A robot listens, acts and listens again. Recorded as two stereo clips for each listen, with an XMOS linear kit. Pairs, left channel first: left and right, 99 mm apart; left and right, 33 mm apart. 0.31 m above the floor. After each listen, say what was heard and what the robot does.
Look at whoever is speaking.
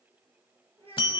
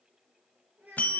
Turn 90° right.
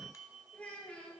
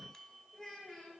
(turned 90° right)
So it is at 10° left. Turn 10° left.
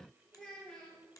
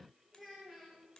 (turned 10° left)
Found it: a child speaking, straight ahead, 2 to 4 m away.